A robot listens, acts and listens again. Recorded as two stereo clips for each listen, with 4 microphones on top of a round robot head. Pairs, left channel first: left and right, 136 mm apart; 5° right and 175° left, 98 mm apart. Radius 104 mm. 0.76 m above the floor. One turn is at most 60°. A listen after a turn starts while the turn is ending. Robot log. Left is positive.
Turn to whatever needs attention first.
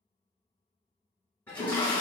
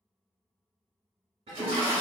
cmd idle
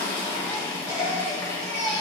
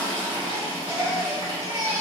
note: The baby crying: 125° right.
cmd yaw -60
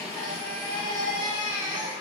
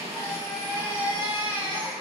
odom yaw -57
note: The baby crying is now 70° right.
cmd yaw -60
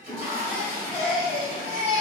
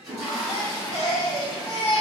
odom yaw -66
end: Facing the baby crying.